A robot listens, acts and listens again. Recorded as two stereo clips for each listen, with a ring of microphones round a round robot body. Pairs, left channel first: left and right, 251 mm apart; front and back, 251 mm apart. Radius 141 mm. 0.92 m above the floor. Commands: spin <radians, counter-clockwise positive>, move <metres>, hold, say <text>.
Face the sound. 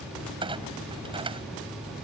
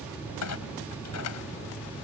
spin -0.35
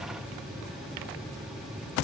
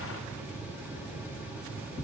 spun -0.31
say Facing where the clunk came from. I can't hear it now.